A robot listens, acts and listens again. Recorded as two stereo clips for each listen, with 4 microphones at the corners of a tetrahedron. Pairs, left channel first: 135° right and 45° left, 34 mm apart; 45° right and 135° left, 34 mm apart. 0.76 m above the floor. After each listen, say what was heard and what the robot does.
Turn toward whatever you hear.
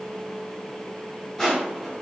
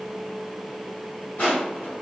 The crushing: 55° right. Turn 55° right.
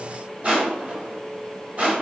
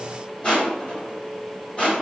The crushing is now 10° left. Turn 10° left.
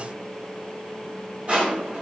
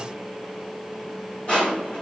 Found it: crushing, straight ahead.